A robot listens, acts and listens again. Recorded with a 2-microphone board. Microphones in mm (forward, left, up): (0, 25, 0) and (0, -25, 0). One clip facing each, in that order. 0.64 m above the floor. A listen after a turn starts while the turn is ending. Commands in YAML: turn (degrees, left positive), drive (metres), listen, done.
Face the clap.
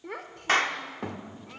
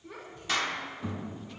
turn: 45
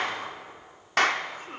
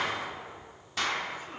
turn: 85
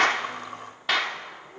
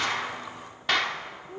done: "Facing the clap, 1 to 2 m away."